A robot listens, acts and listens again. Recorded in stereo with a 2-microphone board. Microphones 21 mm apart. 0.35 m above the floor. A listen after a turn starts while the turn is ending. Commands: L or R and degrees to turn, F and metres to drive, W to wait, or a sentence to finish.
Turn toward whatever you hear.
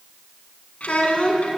L70
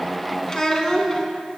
L25
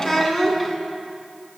L10
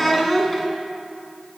Found it: a child speaking, straight ahead.